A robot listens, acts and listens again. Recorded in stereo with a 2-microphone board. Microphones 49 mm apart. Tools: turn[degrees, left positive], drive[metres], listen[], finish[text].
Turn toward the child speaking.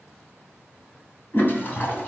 Action: listen[]
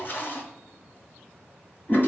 Action: listen[]
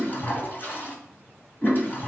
Action: finish[I can't make out a child speaking, only a toilet flushing.]